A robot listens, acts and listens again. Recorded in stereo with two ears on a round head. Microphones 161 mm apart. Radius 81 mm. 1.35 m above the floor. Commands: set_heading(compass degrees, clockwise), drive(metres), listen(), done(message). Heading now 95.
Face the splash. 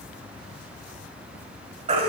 listen()
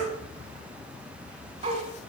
listen()
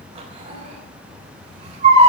done("I can't make out a splash to turn to.")